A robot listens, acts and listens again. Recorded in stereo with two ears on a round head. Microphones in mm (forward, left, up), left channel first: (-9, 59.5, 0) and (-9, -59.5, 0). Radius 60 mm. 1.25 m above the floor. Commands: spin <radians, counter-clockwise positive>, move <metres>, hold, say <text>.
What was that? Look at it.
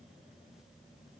hold
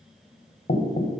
spin 0.87
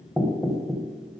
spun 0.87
say Facing the knocking, under 1 m away.